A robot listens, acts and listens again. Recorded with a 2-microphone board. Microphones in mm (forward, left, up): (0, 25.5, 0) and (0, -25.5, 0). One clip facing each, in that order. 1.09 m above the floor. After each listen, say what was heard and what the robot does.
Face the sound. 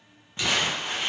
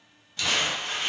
The crumpling: about 25° left or 155° left. Turn 25° left.
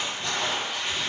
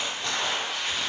Found it: crumpling, straight ahead.